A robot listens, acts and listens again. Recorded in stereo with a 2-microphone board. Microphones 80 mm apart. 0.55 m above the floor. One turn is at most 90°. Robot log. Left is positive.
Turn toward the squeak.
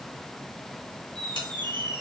cmd yaw -90
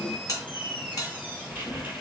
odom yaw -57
note: So it is at 25° right.
cmd yaw -25
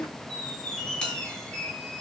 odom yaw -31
note: The squeak is now 10° left.
cmd yaw +10
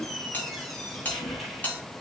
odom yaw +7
end: Found it: a squeak, straight ahead.